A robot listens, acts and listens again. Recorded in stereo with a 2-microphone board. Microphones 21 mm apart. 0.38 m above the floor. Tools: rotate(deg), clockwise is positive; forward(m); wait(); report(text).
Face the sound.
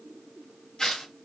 rotate(-30)
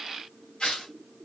rotate(-110)
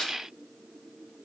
rotate(-40)
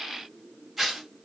rotate(10)
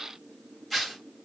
report("Found it: tearing paper, straight ahead.")